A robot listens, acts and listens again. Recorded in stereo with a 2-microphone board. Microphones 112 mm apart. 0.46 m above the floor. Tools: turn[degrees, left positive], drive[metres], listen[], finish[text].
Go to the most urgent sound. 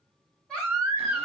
Action: turn[30]
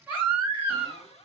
Thought: So it is at 20° right.
Action: turn[-20]
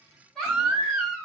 Action: drive[1.0]
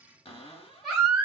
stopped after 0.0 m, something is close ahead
Action: finish[Blocked. The baby crying is further on, straight ahead.]